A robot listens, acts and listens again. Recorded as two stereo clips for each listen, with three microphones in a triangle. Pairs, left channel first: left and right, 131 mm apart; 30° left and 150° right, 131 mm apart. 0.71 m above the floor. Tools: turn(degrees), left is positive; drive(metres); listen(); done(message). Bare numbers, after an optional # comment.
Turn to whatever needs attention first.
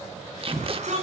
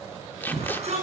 # The shout: 120° right.
turn(-120)
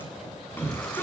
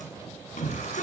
# The shout is now 15° left.
turn(15)
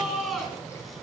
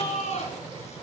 done("Facing the shout.")